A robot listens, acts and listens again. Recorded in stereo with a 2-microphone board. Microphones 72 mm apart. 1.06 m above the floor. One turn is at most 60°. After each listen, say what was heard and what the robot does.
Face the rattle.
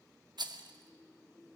Turn 60° right.
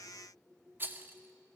So it is at 30° right. Turn 30° right.
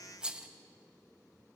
The rattle is now 15° right. Turn 15° right.
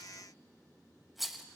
Facing the rattle, 1 to 2 m away.